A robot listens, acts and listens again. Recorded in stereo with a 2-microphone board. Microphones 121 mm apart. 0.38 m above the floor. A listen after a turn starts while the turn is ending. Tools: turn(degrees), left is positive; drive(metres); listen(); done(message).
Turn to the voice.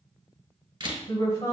turn(degrees=35)
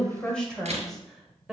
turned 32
done("Found it: a woman speaking, straight ahead, 1 to 2 m away.")